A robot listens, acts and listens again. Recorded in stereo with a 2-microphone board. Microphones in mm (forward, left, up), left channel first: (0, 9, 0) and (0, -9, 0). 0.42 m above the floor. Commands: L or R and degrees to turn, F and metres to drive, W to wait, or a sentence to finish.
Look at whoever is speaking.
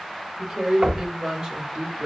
R30
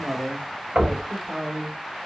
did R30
R30
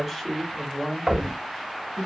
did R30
L20
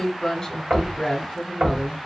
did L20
L20
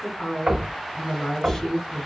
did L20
L10
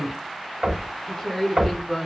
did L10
Found it: a woman speaking, straight ahead, 1 to 2 m away.